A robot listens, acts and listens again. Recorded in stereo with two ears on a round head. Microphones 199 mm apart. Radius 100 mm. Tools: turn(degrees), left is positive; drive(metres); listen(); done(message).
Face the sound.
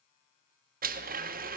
turn(degrees=-40)
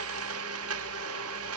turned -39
turn(degrees=-95)
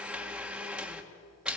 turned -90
done("Found it: a blender, straight ahead, 1 to 2 m away.")